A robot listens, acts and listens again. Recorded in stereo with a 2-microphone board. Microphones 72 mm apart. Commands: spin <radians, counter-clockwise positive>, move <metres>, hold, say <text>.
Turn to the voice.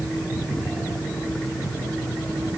hold
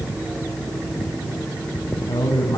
spin 1.57
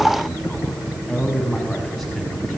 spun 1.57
say Found it: a man speaking, straight ahead, over 4 m away.